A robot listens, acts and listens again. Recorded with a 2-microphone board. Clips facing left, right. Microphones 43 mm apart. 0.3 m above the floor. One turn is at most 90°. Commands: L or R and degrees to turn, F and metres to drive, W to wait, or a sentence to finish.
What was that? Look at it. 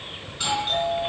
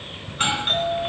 R50
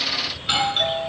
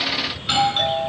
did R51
Found it: a doorbell, straight ahead, over 4 m away.